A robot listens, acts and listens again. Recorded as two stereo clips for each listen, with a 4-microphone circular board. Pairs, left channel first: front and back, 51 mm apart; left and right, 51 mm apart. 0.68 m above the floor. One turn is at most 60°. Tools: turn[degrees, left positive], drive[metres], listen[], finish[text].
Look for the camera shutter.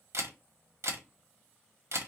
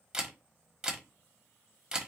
Thought: The camera shutter: 160° right.
Action: turn[-60]
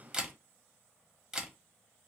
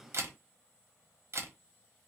Thought: The camera shutter is now 100° right.
Action: turn[-60]
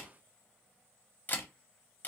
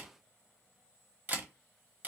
Thought: The camera shutter is now 40° right.
Action: turn[-40]
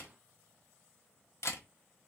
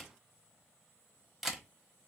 Action: finish[Facing the camera shutter.]